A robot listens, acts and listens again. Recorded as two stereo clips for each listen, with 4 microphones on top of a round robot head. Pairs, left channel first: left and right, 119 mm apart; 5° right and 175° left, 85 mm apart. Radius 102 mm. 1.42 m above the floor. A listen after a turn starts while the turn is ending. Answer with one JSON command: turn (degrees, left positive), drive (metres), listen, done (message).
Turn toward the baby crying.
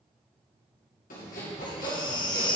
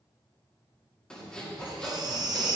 {"turn": 140}
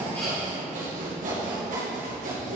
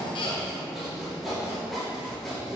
{"listen": true}
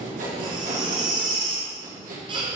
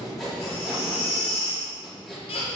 {"turn": -30}
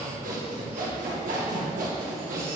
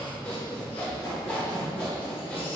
{"listen": true}
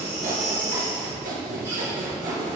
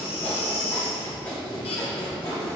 {"turn": -15}
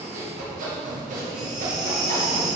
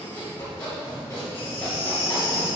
{"done": "Facing the baby crying."}